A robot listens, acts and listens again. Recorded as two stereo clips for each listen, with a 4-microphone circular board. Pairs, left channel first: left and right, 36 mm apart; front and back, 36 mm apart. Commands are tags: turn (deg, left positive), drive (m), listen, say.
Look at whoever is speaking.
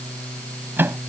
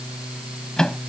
<listen/>
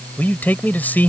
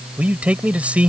<turn deg="125"/>
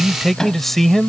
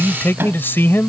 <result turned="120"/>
<say>Facing the man speaking.</say>